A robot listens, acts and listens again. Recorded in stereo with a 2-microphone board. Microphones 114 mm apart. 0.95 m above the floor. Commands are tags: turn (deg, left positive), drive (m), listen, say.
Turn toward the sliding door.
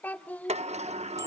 <turn deg="-70"/>
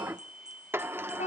<turn deg="-20"/>
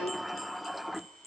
<say>Facing the sliding door.</say>